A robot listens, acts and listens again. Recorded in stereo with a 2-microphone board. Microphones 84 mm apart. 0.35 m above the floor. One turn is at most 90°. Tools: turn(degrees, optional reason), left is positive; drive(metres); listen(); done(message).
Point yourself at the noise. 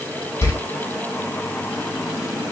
turn(degrees=30, reason="The door slam: about 30° left or 150° left.")
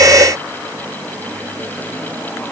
listen()
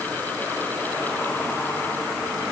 done("I heard a door slam, but can't make it out now. It was about straight ahead or 120° left.")